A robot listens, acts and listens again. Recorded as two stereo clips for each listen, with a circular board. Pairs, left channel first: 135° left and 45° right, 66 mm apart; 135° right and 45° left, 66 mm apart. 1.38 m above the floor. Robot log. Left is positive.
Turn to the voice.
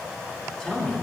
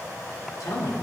note: The man speaking: 145° right.
cmd yaw -145
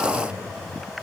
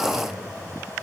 note: The man speaking is now 25° right.
cmd yaw -25
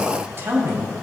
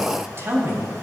end: Facing the man speaking, 2 to 4 m away.